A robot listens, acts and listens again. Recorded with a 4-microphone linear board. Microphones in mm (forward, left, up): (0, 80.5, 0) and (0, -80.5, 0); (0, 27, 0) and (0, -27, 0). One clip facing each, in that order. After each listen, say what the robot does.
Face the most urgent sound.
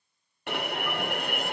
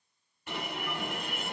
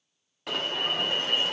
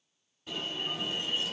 Turn 70° left.
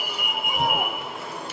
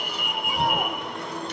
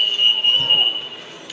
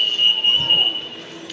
Found it: an alarm, straight ahead.